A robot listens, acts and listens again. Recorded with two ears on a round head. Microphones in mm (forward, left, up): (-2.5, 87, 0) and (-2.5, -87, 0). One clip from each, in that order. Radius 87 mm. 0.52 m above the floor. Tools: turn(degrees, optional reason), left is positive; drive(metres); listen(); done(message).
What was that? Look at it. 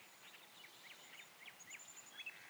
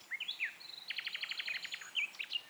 listen()
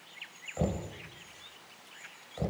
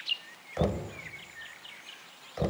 turn(degrees=-45, reason="The knocking: about 45° right or 135° right.")
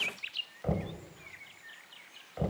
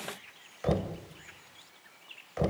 turn(degrees=-85, reason="So it is at 85° right.")
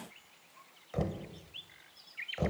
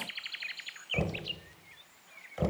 done("Found it: knocking, straight ahead.")